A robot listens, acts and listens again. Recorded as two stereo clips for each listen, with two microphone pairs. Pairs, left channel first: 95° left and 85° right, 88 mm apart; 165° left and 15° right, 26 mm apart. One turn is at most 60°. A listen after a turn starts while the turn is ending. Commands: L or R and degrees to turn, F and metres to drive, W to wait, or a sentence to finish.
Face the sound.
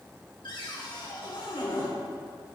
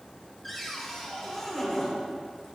L60
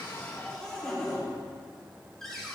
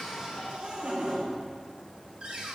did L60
L15
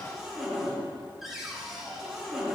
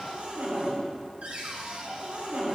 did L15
Found it: a cupboard door, straight ahead, 2 to 4 m away.